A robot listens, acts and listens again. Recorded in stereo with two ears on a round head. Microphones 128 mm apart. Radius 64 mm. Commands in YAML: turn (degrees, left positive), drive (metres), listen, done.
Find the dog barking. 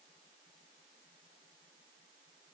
listen: true
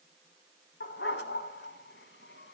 turn: 90
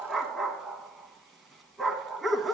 done: "Found it: a dog barking, straight ahead, under 1 m away."